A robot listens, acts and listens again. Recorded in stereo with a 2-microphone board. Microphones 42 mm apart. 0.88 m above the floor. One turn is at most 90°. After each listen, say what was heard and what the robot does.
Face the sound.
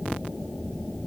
Keep listening.
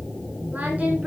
Keep listening.
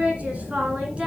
The singing: about 30° right or 150° right. Turn 30° right.
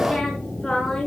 So it is at 10° left. Turn 10° left.
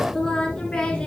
The singing is now 15° left. Turn 15° left.
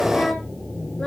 Keep listening.
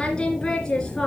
The singing is now 15° left. Turn 15° left.
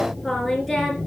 Facing the singing, 2 to 4 m away.